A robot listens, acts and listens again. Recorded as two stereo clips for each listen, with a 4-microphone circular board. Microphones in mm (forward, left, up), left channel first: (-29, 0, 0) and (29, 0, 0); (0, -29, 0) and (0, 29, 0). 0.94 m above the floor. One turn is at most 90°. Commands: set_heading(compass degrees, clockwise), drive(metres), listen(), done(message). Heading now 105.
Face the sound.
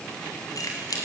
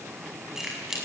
set_heading(15)
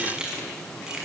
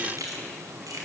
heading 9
set_heading(294)
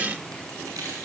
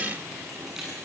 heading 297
done("Facing the keys jangling.")